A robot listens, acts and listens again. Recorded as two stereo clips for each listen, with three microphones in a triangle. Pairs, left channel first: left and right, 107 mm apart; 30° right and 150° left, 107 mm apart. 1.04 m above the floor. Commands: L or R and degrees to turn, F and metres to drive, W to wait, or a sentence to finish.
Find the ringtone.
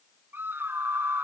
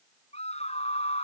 W
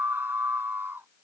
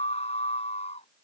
W
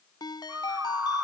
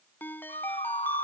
L40
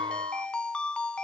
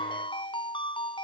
L10
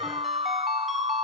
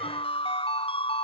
W
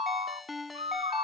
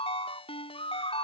Facing the ringtone.